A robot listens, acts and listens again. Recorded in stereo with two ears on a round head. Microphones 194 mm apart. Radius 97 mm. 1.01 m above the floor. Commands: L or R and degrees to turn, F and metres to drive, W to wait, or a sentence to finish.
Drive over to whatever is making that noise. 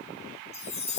L30
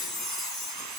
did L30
F1.0
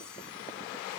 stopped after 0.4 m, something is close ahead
W
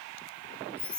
Blocked. The chime is further on, straight ahead.